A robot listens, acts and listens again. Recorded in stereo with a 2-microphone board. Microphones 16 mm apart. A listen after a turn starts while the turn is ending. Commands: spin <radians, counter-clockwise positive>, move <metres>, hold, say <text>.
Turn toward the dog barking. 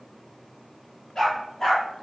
spin 0.61
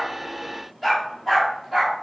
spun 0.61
say Found it: a dog barking, straight ahead.